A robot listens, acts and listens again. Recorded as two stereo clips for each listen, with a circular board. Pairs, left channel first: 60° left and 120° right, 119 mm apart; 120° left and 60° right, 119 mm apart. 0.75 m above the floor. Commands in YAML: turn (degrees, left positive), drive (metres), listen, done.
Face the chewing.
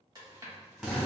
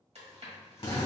turn: -65
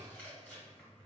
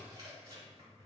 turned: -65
turn: -15
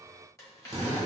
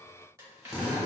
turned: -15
done: "Found it: chewing, straight ahead, 2 to 4 m away."